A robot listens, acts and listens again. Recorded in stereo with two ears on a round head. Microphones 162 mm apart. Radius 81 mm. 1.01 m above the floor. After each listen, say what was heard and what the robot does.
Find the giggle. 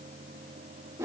Keep listening.
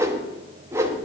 Keep listening.
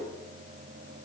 I can't make out a giggle to turn to.